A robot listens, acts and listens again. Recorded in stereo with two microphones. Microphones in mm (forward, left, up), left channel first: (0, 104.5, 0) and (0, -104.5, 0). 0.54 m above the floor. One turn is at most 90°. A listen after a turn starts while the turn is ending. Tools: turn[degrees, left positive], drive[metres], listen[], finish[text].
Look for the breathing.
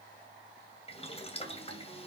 Action: listen[]
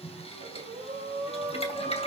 Thought: The breathing: about 30° right or 150° right.
Action: turn[-30]
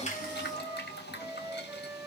Action: listen[]
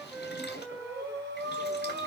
Thought: So it is at 120° right.
Action: turn[-90]
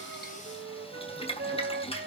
Thought: Nothing new. It was at 30° right.
Action: turn[-30]
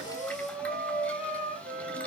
Action: finish[Facing the breathing.]